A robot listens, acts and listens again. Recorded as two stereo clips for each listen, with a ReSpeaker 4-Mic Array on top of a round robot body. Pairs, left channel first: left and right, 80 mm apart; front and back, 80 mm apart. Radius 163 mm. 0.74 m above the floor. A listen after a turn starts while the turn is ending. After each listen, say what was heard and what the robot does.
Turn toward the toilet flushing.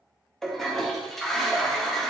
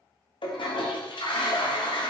Facing the toilet flushing, under 1 m away.